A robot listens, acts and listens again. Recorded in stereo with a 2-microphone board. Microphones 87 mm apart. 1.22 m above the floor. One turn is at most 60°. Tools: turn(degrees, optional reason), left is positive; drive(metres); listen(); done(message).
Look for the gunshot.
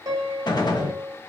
turn(degrees=55, reason="The gunshot: about 55° left or 125° left.")
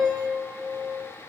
listen()
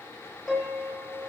done("I heard a gunshot, but can't make it out now. It was about straight ahead or 70° left.")